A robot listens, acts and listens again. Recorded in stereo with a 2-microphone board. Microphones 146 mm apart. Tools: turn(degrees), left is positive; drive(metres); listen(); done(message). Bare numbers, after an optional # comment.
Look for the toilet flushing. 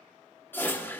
# The toilet flushing: about 15° left or 165° left.
turn(15)
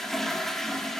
done("Facing the toilet flushing, 1 to 2 m away.")